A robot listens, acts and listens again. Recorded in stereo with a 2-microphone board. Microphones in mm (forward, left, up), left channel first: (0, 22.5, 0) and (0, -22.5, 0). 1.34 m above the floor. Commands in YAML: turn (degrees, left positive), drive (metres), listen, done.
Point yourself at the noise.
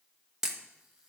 turn: -30
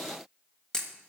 turn: 20
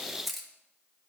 done: "Found it: a camera shutter, straight ahead."